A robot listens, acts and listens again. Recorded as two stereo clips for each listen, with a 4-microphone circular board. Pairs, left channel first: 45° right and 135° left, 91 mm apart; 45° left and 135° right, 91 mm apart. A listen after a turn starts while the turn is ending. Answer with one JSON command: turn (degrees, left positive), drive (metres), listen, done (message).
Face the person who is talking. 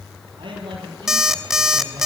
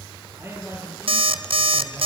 {"turn": 160}
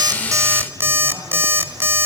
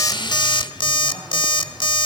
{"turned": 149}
{"turn": 15}
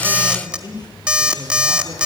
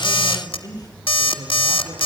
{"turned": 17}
{"done": "Facing the man speaking."}